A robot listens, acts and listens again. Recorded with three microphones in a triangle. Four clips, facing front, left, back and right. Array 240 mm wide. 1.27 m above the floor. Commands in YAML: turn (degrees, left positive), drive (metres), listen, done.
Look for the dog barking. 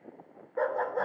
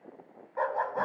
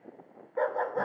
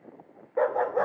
turn: -90
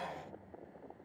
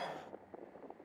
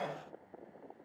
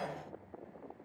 listen: true
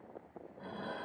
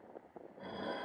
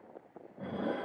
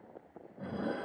listen: true
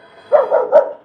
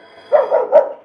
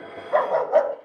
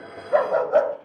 turn: 55
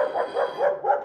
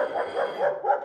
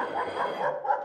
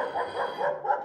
turn: 30
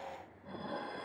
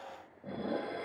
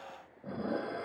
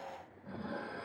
listen: true
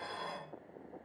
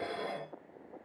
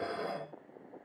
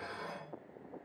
listen: true
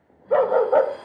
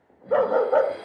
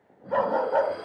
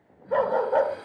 turn: 25
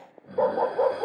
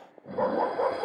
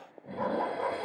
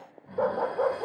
done: "Found it: a dog barking, straight ahead."